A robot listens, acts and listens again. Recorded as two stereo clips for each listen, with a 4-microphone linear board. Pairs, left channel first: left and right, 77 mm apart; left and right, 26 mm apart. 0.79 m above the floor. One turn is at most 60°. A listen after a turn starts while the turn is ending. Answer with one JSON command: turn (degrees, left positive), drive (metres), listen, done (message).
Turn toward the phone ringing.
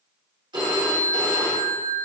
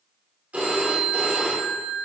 {"turn": -60}
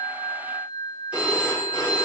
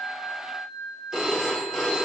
{"turn": -15}
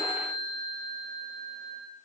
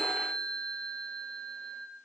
{"done": "Facing the phone ringing, 1 to 2 m away."}